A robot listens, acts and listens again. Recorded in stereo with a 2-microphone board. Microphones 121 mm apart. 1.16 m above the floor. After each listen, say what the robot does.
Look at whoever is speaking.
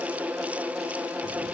Keep listening.
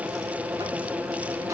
Keep listening.
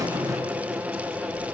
I can't make out anyone speaking, only a buzzer.